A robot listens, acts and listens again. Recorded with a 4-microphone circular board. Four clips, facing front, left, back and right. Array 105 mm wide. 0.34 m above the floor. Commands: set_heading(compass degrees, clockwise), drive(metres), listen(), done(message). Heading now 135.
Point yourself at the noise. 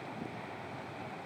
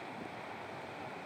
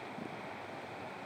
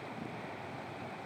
listen()
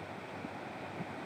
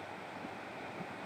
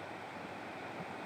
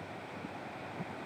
listen()
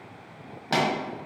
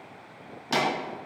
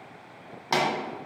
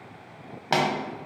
set_heading(230)
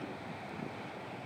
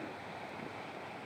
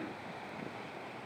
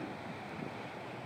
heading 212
set_heading(232)
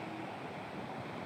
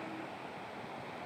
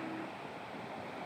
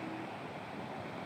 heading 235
done("I heard a pop from this way, but can't make it out now.")